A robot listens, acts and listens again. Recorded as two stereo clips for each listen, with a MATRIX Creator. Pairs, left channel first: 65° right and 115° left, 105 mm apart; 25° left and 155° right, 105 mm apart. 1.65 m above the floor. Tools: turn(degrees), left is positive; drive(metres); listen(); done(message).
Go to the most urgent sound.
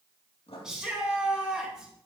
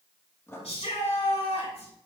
turn(degrees=30)
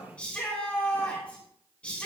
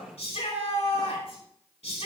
turn(degrees=10)
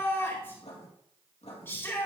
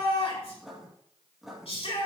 drive(metres=1.0)
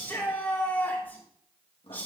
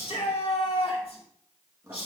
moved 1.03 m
drive(metres=1.0)
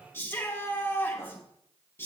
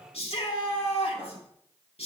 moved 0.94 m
drive(metres=1.0)
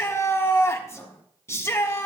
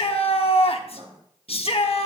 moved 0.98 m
drive(metres=1.0)
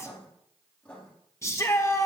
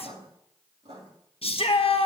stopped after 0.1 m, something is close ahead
done("I am next to the shout.")